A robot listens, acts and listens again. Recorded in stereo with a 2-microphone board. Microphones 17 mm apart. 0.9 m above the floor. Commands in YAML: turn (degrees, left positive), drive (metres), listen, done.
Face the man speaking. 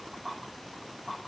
listen: true
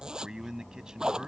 turn: -50
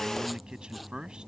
turn: -75
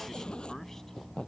listen: true
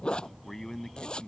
turn: 30
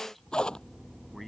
listen: true
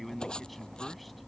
turn: 10
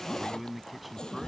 done: "Facing the man speaking."